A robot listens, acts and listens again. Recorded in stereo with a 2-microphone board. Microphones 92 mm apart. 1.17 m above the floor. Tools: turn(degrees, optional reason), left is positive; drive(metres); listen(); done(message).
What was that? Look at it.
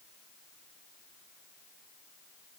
listen()
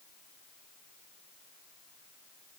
listen()
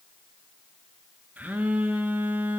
turn(degrees=-20, reason="The phone buzzing: about 20° right or 160° right.")
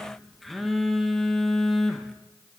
done("Found it: a phone buzzing, straight ahead, under 1 m away.")